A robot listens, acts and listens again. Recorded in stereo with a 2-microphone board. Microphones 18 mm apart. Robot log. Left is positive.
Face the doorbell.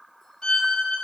cmd idle
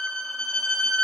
cmd idle
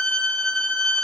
end: I can't make out a doorbell, only a violin.